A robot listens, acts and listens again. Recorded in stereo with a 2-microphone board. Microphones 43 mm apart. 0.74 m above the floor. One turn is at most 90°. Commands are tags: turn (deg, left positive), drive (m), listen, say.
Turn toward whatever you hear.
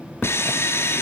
<turn deg="75"/>
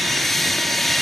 <say>Found it: sawing, straight ahead, 2 to 4 m away.</say>